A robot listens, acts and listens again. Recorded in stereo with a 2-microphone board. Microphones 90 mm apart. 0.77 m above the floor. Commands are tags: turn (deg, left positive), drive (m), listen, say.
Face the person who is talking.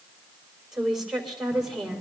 <turn deg="-30"/>
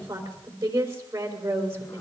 <turn deg="-145"/>
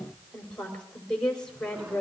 <turn deg="10"/>
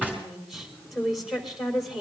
<say>Found it: a woman speaking, straight ahead, 2 to 4 m away.</say>